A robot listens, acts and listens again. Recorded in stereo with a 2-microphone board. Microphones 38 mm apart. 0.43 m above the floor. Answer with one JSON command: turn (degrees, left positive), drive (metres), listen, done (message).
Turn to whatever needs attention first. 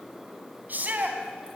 {"turn": -50}
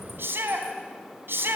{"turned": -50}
{"turn": -80}
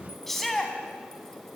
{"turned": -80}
{"done": "Found it: a shout, straight ahead."}